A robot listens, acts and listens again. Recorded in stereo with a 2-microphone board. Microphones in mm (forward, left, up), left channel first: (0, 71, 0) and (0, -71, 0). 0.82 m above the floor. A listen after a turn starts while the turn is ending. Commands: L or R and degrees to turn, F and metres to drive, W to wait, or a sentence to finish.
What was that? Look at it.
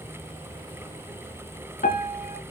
L90
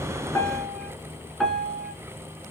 Found it: a piano, straight ahead, 2 to 4 m away.